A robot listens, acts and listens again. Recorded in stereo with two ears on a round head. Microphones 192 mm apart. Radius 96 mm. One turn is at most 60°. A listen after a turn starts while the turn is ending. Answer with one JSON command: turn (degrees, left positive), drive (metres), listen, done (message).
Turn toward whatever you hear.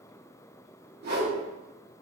{"turn": -50}
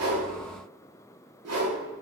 {"turn": -60}
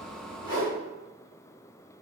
{"turn": -20}
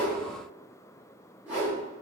{"turn": -10}
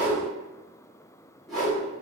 {"done": "Found it: a whoosh, straight ahead, 1 to 2 m away."}